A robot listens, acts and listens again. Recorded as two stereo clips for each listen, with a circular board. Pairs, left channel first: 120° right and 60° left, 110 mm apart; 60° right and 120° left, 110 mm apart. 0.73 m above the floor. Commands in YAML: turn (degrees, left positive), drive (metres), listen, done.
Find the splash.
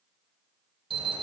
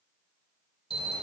listen: true
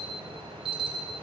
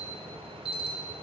listen: true
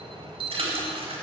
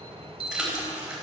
turn: 35
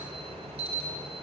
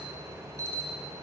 done: "Facing where the splash came from. I can't hear it now."